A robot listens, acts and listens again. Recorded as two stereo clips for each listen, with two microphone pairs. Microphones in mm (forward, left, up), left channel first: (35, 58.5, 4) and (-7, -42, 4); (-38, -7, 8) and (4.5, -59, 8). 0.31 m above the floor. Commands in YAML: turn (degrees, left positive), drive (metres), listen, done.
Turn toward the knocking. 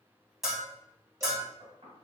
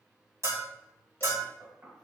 turn: -85
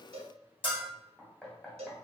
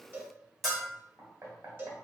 turn: -20
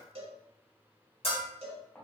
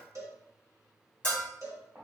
done: "Facing the knocking, 1 to 2 m away."